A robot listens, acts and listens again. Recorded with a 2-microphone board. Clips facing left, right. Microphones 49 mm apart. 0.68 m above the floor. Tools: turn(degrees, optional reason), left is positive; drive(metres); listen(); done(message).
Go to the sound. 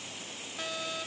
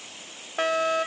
turn(degrees=-60, reason="The fire alarm: about 60° right or 120° right.")
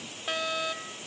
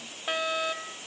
turn(degrees=-10, reason="So it is at 10° right.")
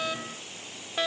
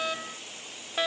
drive(metres=1.0)
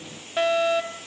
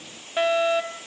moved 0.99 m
drive(metres=1.0)
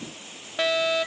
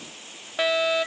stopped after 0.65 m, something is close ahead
turn(degrees=-10, reason="The fire alarm is now 10° right.")
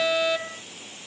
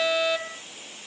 done("I am next to the fire alarm.")